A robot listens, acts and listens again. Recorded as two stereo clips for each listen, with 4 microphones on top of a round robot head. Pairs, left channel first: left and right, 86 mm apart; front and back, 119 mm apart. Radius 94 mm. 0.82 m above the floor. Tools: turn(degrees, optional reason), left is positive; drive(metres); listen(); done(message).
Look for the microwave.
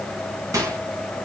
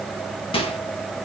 turn(degrees=-40, reason="The microwave: 40° right.")
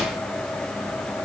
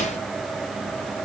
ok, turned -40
listen()
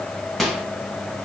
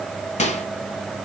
done("Found it: a microwave, straight ahead.")